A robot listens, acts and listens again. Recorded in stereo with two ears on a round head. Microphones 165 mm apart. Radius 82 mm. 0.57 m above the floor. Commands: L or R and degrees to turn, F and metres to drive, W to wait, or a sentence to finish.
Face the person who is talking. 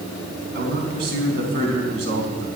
R70
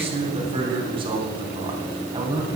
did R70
R20
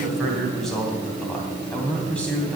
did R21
Facing the man speaking.